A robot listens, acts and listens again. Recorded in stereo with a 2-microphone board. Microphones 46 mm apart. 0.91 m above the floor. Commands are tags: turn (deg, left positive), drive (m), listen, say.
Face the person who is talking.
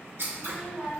<turn deg="-15"/>
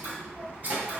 <turn deg="-150"/>
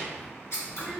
<turn deg="-10"/>
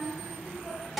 <say>Facing the child speaking, 1 to 2 m away.</say>